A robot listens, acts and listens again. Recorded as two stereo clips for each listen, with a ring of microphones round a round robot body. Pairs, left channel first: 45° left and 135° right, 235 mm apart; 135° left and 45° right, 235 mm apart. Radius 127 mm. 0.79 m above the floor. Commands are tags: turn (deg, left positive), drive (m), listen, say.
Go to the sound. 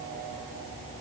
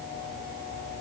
<listen/>
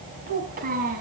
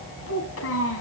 <turn deg="170"/>
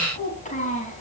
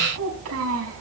<turn deg="-15"/>
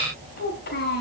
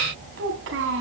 <drive m="1.0"/>
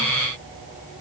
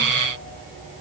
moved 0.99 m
<listen/>
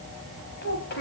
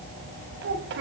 <drive m="1.0"/>
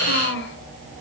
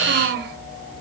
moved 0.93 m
<drive m="1.0"/>
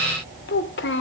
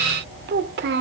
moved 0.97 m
<drive m="1.0"/>
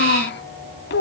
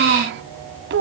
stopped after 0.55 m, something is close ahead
<say>Arrived at the child speaking, straight ahead.</say>